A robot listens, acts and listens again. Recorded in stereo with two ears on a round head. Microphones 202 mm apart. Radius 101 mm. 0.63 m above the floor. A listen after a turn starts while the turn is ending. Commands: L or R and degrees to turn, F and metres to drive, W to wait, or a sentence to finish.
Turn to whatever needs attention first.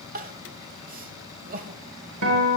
R40
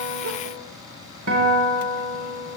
W
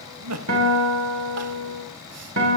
R95
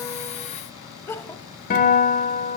L10
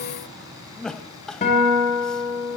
Facing the crying, under 1 m away.